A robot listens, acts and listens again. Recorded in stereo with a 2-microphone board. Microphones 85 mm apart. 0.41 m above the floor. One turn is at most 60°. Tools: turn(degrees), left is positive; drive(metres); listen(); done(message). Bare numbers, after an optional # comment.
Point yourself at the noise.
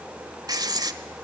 # The writing: about 50° right or 130° right.
turn(-50)
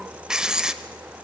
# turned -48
# So it is at 10° right.
turn(-10)
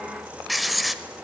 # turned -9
done("Facing the writing.")